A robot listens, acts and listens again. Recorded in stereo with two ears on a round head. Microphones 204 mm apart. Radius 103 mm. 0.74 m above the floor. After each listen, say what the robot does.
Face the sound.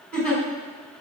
Turn 30° left.
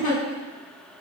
Turn 145° left.
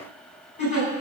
Turn 30° left.
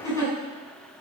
Turn 15° left.
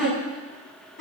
Facing the giggle, over 4 m away.